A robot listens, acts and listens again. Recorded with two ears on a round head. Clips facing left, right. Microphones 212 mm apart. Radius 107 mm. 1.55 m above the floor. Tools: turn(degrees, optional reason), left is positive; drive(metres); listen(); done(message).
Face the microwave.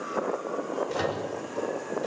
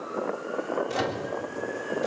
turn(degrees=-90)
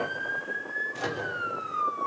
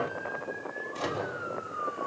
turn(degrees=15, reason="So it is at 15° left.")
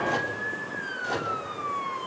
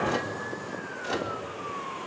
done("Facing the microwave.")